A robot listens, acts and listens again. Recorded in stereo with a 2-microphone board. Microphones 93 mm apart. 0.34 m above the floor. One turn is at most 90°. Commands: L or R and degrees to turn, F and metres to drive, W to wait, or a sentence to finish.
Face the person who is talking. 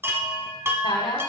L65
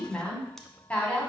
L15
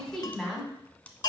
Facing the woman speaking.